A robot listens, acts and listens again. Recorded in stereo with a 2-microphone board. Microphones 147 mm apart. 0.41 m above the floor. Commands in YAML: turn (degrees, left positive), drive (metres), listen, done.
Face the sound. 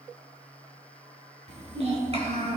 turn: -45
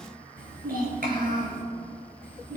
turn: -110
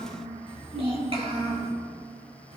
turn: -40
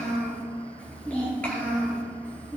turn: 10
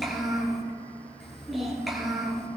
done: "Found it: a child speaking, straight ahead, over 4 m away."